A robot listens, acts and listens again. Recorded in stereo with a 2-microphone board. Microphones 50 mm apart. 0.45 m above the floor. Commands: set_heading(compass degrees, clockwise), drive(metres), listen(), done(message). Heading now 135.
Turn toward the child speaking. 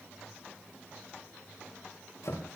listen()
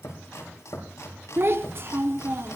set_heading(190)
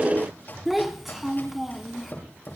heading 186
done("Found it: a child speaking, straight ahead.")